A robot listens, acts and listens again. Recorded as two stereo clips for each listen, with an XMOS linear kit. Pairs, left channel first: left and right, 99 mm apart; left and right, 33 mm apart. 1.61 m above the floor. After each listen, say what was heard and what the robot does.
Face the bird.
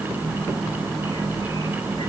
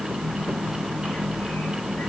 Keep listening.
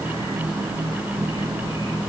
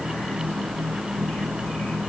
Keep listening.
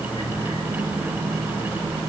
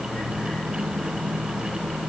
I can't make out a bird to turn to.